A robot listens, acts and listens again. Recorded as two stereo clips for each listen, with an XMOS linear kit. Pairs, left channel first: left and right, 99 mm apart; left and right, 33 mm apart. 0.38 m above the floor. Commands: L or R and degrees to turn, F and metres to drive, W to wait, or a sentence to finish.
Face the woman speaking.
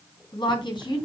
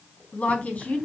L50
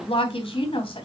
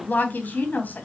L65
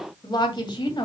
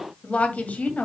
L45
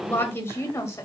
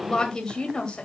L25
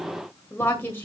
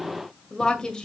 L20
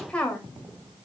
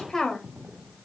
L10
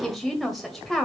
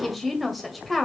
Found it: a woman speaking, straight ahead.